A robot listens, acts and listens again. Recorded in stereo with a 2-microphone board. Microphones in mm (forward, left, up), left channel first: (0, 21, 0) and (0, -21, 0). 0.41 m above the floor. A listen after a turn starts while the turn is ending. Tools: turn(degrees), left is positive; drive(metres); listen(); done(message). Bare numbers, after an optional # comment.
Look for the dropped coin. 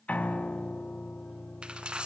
# The dropped coin: about 25° right or 155° right.
turn(-25)
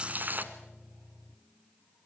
# So it is at 130° right.
turn(-130)
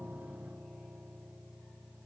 done("Facing where the dropped coin came from. I can't hear it now.")